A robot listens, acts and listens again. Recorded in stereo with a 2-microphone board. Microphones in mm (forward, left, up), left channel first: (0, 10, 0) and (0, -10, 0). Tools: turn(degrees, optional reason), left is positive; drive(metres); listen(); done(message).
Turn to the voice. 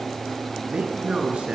turn(degrees=-70, reason="The man speaking: about 70° right or 110° right.")
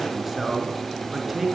turn(degrees=-10, reason="So it is at 10° right.")
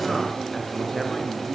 listen()
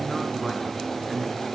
done("Facing the man speaking, over 4 m away.")